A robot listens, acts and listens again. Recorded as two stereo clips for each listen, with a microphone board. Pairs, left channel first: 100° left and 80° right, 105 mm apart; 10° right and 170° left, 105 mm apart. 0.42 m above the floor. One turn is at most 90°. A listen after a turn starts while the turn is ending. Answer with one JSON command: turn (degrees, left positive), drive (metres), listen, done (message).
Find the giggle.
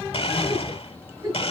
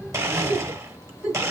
{"turn": -90}
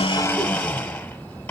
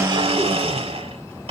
{"turn": -35}
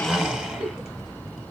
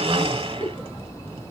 {"turn": -35}
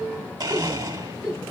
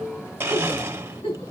{"done": "Found it: a giggle, straight ahead."}